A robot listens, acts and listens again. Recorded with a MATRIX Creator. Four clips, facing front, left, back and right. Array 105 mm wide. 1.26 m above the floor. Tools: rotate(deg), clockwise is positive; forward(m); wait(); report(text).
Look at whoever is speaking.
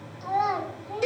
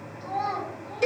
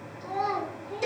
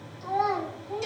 report("Found it: a child speaking, straight ahead, 2 to 4 m away.")